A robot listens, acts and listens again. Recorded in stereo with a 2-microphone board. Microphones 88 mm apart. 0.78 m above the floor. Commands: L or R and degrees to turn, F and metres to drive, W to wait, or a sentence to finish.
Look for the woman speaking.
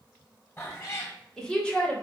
L15
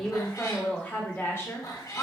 L40
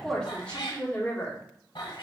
L25
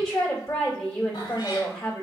L10
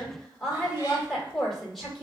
Facing the woman speaking.